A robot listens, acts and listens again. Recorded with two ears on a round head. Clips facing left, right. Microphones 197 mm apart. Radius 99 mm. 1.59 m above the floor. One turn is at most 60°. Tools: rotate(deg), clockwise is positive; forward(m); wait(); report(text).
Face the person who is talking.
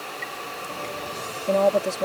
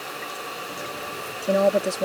rotate(30)
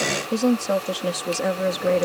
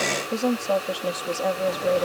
rotate(-30)
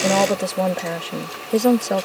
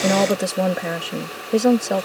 report("Facing the woman speaking.")